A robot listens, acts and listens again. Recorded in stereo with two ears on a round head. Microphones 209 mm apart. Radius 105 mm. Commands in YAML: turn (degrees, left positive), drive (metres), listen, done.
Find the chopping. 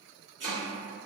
turn: -50
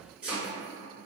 done: "Found it: chopping, straight ahead."